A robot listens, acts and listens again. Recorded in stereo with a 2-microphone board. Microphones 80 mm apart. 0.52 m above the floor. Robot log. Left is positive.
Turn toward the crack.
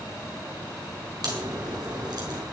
note: The crack: about 55° right or 125° right.
cmd yaw -55
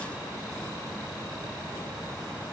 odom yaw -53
cmd idle
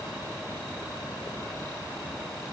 end: I heard a crack, but can't make it out now. It was about 5° right or 70° right.